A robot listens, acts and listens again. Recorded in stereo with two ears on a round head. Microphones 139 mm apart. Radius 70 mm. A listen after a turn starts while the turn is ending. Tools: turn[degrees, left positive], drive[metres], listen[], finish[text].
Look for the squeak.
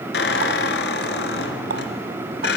Thought: The squeak: about 70° left or 110° left.
Action: turn[70]
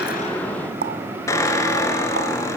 Thought: So it is at 20° left.
Action: turn[20]
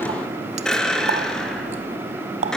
Action: finish[Found it: a squeak, straight ahead, 2 to 4 m away.]